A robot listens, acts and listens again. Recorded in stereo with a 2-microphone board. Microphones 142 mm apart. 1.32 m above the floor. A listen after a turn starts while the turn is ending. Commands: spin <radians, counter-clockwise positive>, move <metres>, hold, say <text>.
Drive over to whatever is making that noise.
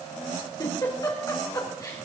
spin 0.44
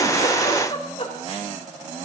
spin 2.27
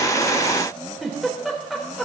move 1.0
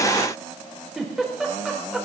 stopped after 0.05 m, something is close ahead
say Something is in my way. I am facing the giggle but have not reached it.